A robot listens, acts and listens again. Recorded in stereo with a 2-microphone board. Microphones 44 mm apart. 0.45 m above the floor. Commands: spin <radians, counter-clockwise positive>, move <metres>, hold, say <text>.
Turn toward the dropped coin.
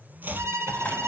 spin 0.61
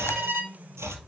hold
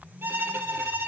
say I heard a dropped coin, but can't make it out now. It was about straight ahead or 110° left.